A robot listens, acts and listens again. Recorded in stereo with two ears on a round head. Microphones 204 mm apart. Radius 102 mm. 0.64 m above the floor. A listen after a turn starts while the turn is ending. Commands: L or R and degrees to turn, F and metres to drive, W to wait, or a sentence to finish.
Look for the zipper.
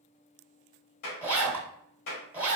R30
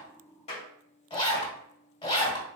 L20
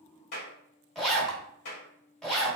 Facing the zipper, under 1 m away.